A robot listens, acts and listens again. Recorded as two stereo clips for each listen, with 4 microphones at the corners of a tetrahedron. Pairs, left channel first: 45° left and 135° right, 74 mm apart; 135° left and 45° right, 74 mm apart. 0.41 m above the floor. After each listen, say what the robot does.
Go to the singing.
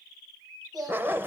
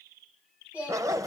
Turn 115° right.
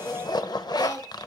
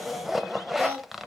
Drive 1.0 m forward.
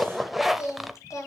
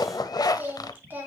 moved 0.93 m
Turn 15° left.
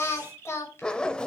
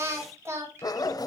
Drive 1.0 m forward.
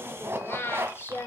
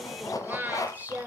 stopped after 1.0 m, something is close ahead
I am next to the singing.